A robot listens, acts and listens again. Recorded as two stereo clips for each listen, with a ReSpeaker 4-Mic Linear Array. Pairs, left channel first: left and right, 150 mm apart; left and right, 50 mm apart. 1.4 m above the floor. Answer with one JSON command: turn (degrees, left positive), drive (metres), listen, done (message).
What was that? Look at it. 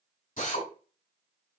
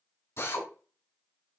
{"turn": 60}
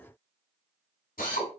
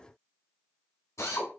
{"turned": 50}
{"turn": 70}
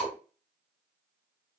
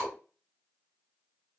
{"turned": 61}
{"turn": 10}
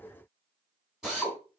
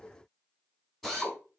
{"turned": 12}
{"done": "Found it: a drill, straight ahead."}